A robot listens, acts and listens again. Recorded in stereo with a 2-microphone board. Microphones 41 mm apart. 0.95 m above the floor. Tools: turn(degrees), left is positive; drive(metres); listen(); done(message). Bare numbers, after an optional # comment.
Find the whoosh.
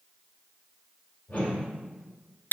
# The whoosh: about 40° left or 140° left.
turn(40)
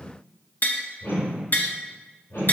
# So it is at 105° left.
turn(105)
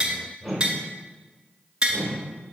# The whoosh is now 15° left.
turn(15)
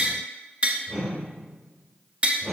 done("Found it: a whoosh, straight ahead, 2 to 4 m away.")